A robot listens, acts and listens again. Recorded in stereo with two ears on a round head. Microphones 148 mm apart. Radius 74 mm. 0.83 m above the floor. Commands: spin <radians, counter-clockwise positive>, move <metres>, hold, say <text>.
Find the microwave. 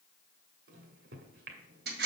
spin -1.13
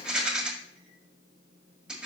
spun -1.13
spin -0.79
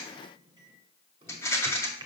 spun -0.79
spin -0.44
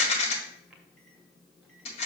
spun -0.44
say Found it: a microwave, straight ahead, 1 to 2 m away.